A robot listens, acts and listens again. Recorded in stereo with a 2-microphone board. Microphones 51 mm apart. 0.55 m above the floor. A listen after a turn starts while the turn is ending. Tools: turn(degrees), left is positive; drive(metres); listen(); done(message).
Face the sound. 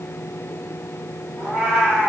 turn(degrees=-30)
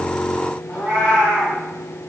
turn(degrees=30)
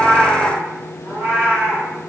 turn(degrees=-40)
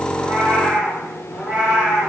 turn(degrees=-10)
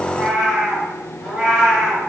done("Found it: a cat meowing, straight ahead.")